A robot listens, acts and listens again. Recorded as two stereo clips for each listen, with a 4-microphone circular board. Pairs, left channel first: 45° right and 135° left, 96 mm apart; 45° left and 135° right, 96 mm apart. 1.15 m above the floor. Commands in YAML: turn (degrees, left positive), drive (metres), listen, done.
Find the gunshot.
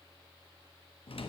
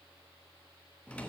listen: true
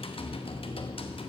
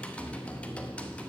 listen: true
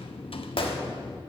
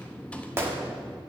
turn: -70
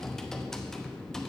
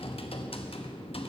done: "I heard a gunshot from this way, but can't make it out now."